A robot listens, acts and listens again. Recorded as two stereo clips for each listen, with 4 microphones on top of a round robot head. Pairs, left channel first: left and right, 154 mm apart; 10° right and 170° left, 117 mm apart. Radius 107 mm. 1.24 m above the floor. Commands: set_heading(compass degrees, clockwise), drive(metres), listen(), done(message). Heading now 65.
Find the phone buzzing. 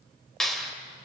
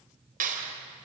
listen()
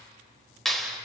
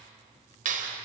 listen()
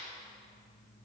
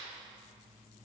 done("I can't make out a phone buzzing, only a clap.")